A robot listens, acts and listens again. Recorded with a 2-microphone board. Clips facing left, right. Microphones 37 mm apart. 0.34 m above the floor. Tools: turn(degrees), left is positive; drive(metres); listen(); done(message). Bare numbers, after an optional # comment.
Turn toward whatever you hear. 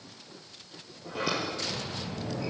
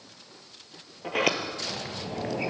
turn(-90)
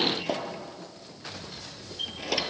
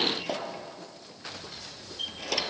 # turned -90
done("Facing the sliding door.")